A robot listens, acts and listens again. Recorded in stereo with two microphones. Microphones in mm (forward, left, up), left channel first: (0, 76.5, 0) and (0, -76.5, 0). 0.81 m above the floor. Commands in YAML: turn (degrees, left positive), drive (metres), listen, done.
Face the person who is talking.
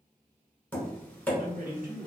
turn: -70
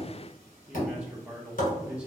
done: "Facing the man speaking, 1 to 2 m away."